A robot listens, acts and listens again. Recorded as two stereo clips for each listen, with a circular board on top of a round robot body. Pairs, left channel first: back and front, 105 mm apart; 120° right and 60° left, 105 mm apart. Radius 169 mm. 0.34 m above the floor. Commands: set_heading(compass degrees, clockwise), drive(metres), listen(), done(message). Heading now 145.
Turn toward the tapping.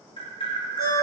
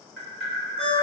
set_heading(345)
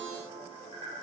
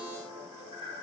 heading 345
listen()
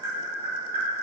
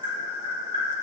set_heading(300)
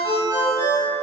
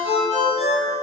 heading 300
listen()
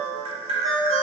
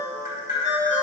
set_heading(290)
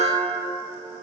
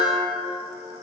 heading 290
listen()
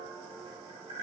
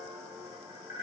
done("Found it: tapping, straight ahead.")